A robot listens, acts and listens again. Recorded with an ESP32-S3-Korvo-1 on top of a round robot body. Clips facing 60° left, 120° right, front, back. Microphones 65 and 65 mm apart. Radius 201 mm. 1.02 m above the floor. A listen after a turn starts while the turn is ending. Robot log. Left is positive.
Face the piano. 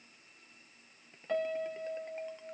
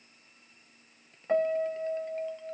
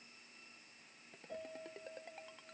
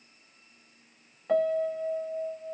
note: The piano: 175° left.
cmd yaw +175
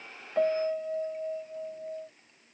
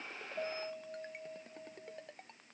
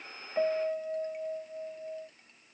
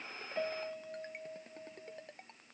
note: The piano is now 45° left.
cmd yaw +45
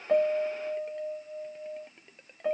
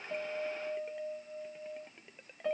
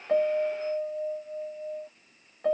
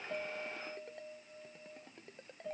note: The piano is now 15° right.
cmd yaw -15
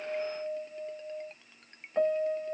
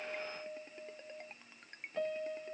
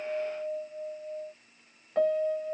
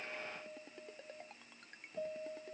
end: Found it: a piano, straight ahead.